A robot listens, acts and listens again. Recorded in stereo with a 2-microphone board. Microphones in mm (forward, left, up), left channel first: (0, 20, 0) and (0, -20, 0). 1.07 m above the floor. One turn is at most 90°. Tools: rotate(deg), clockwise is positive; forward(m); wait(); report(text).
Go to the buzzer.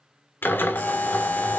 rotate(-55)
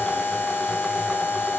rotate(-70)
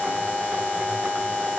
rotate(-30)
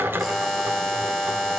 forward(1.0)
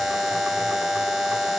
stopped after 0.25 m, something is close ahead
report("Blocked. The buzzer is further on, straight ahead.")